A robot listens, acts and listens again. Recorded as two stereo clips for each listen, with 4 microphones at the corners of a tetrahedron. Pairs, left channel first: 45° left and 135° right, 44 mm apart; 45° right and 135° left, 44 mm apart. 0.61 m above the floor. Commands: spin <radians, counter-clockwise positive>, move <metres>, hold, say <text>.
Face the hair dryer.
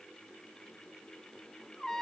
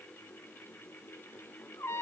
hold
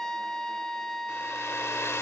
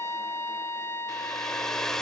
spin 0.61
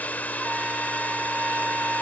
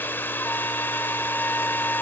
spin -0.17
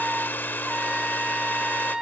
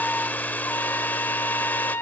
say Found it: a hair dryer, straight ahead.